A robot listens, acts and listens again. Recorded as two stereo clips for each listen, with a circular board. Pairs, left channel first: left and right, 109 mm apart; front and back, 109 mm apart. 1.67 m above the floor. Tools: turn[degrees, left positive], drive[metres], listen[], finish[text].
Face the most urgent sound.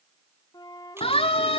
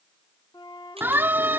Thought: The siren: 110° left.
Action: turn[110]
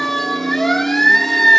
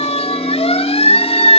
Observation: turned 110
Action: finish[Found it: a siren, straight ahead.]